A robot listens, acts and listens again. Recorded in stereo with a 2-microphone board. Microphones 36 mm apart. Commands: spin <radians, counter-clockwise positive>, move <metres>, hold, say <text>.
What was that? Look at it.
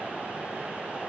hold
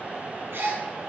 spin -1.57
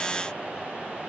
say I heard a gasp from this way, but can't make it out now.